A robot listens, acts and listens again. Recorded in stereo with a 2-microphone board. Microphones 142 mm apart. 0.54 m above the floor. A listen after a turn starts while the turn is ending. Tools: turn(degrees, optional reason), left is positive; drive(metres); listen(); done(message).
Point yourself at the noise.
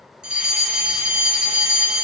turn(degrees=-30)
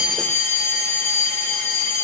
turn(degrees=20, reason="So it is at 20° left.")
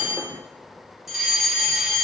done("Found it: a fire alarm, straight ahead.")